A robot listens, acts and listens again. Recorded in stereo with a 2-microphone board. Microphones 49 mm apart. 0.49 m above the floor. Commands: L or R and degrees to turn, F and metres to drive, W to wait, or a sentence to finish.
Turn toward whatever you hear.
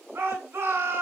R65
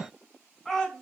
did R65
Facing the shout, 2 to 4 m away.